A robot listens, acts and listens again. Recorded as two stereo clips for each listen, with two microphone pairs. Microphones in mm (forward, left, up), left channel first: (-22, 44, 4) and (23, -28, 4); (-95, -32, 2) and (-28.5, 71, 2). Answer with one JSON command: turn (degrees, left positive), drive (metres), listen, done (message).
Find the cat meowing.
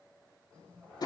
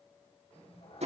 {"turn": -155}
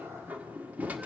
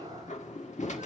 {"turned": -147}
{"turn": -10}
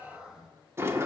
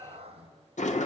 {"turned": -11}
{"turn": 20}
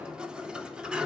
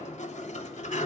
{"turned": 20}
{"listen": true}
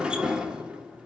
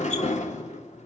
{"listen": true}
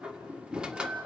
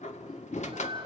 {"done": "I heard a cat meowing from this way, but can't make it out now."}